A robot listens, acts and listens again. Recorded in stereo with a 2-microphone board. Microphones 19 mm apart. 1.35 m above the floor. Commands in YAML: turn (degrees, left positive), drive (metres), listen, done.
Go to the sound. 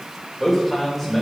turn: 30
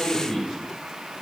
turn: 135
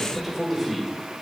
drive: 1.0
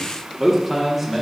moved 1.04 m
turn: -15
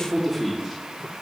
drive: 1.0
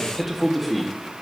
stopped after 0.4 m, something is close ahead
done: "Arrived at the man speaking, straight ahead."